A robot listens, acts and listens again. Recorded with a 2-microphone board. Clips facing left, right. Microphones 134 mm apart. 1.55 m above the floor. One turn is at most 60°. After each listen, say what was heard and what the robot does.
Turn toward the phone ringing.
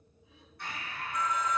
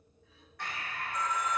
The phone ringing: about 30° right or 150° right. Turn 30° right.
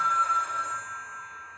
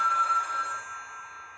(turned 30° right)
Facing the phone ringing, 2 to 4 m away.